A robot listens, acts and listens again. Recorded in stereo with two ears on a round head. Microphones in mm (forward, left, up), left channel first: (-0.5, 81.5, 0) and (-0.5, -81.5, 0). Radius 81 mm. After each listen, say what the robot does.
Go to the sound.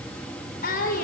Turn 50° left.
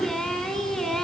Drive 1.0 m forward.
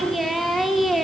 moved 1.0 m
Drive 1.0 m forward.
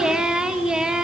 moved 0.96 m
Drive 1.0 m forward.
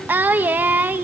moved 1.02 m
Turn 10° right.
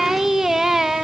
Drive 1.0 m forward.
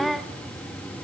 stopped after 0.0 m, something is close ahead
Arrived at the singing, straight ahead.